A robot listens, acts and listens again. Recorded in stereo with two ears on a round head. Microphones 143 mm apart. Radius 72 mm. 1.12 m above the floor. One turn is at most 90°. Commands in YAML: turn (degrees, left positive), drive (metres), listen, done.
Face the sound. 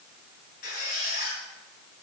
turn: 65
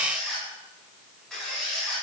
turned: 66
done: "Found it: a squeak, straight ahead."